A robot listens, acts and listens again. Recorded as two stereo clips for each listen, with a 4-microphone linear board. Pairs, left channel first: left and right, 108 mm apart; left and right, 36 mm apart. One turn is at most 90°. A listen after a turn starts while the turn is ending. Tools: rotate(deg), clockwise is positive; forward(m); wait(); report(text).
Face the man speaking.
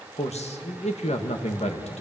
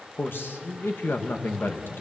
rotate(-90)
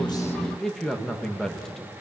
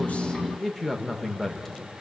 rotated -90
report("Facing the man speaking.")